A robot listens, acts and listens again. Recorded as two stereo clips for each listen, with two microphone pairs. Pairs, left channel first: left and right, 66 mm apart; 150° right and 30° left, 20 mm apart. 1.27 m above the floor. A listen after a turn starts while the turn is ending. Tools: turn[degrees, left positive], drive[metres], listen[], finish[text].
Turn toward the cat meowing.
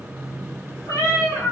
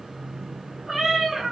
Thought: The cat meowing: 110° left.
Action: turn[110]
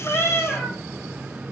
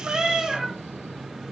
Thought: The cat meowing is now 15° left.
Action: turn[15]
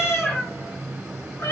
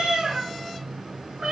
Thought: The cat meowing is now 60° left.
Action: turn[60]
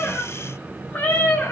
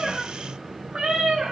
Thought: The cat meowing is now 40° left.
Action: turn[40]
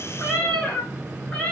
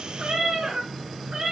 Thought: The cat meowing is now 20° left.
Action: turn[20]
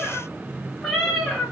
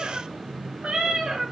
Action: finish[Found it: a cat meowing, straight ahead.]